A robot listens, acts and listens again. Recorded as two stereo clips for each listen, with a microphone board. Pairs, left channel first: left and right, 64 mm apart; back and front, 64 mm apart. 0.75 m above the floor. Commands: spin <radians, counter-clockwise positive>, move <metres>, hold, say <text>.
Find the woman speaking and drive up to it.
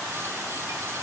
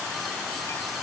hold
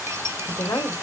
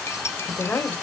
spin 2.01
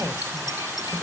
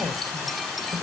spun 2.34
spin -0.35
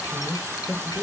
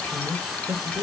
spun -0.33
move 1.0
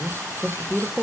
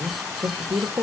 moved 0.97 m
move 1.0
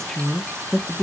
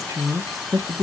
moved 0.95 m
move 1.0
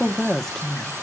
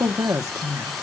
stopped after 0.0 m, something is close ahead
say I am next to the woman speaking.